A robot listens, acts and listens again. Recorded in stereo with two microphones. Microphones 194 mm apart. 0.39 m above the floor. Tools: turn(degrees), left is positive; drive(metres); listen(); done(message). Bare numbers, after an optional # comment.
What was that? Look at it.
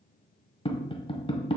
# The tapping: about 25° left or 155° left.
turn(25)
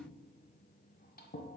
listen()
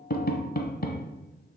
# So it is at 125° left.
turn(125)
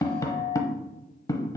# The tapping is now 20° left.
turn(20)
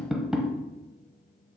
done("Found it: tapping, straight ahead, under 1 m away.")